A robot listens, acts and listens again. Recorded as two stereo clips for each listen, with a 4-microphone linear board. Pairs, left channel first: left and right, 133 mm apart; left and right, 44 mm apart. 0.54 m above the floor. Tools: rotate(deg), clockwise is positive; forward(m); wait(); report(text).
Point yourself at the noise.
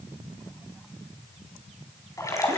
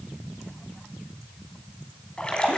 rotate(-25)
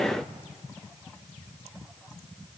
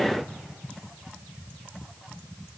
wait()
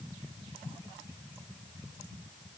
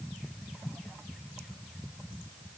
report("I heard a splash, but can't make it out now. It was about straight ahead or 130° left.")